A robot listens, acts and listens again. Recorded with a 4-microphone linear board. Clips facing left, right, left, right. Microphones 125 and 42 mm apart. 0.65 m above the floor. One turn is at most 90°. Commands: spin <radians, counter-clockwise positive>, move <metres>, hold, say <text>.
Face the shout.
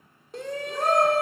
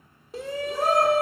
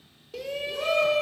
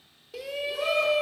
spin 0.52
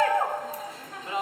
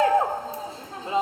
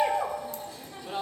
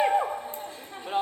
spin -0.61
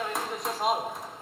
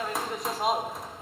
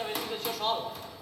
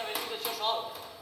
say Facing the shout, 1 to 2 m away.